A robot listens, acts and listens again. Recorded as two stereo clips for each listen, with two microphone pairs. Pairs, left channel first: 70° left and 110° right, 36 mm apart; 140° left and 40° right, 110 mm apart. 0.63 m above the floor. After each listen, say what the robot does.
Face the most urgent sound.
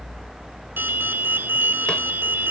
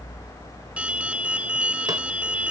Turn 120° right.
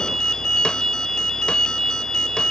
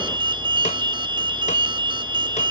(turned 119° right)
Facing the alarm.